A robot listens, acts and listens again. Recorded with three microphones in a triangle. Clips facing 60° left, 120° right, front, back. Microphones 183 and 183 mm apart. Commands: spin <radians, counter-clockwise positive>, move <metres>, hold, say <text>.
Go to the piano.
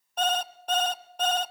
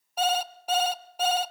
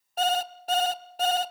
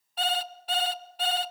hold
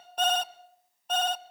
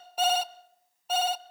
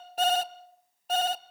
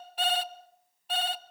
hold
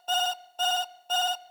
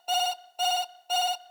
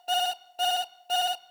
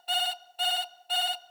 say I can't make out a piano, only an alarm clock.